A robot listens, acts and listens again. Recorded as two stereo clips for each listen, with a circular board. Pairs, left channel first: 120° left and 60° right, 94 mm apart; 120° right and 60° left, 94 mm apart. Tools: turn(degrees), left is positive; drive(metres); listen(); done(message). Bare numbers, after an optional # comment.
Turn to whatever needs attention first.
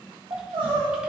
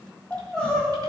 # The crying: 40° right.
turn(-40)
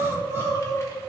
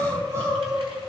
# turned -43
done("Found it: crying, straight ahead, 2 to 4 m away.")